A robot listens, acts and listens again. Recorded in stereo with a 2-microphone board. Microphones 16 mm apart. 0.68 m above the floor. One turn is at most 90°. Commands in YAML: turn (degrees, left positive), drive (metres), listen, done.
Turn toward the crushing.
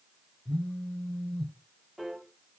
listen: true
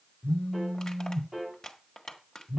turn: 45
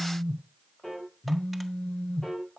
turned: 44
listen: true
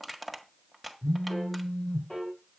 done: "Found it: crushing, straight ahead."